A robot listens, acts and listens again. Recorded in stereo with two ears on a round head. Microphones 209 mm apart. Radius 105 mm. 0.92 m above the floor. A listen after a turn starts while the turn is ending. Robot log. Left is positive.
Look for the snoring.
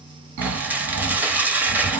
note: The snoring: about 65° right or 115° right.
cmd yaw -65
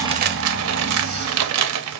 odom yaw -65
note: So it is at 35° right.
cmd yaw -35
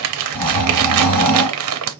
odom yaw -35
note: The snoring is now 10° left.
cmd yaw +10
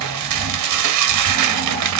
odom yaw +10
end: Found it: snoring, straight ahead.